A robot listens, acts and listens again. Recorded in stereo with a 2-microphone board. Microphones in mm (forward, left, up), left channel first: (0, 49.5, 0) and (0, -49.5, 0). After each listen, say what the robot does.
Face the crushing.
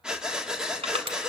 Turn 90° right.
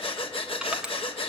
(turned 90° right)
Turn 10° right.
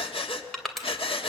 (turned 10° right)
Found it: crushing, straight ahead.